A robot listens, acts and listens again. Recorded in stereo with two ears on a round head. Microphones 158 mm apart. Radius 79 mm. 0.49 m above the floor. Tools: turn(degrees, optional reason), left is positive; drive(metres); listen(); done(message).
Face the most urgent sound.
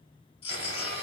turn(degrees=30, reason="The baby crying: about 30° left or 150° left.")
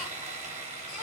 listen()
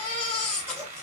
done("Found it: a baby crying, straight ahead, 1 to 2 m away.")